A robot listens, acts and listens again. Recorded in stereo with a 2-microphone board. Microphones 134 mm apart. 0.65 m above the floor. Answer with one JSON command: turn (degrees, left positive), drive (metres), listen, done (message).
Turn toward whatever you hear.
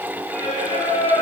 {"turn": 70}
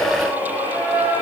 {"turn": 35}
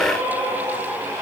{"turn": -25}
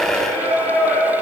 {"turn": 15}
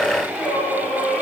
{"done": "Found it: singing, straight ahead, 2 to 4 m away."}